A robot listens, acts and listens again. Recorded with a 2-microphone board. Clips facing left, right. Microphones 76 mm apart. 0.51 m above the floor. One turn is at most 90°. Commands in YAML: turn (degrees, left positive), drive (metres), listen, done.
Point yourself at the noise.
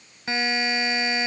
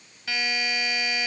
turn: 30
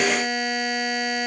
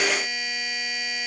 turn: 90
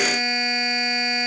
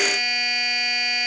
turn: 30
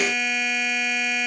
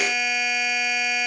done: "Found it: a buzzer, straight ahead, 1 to 2 m away."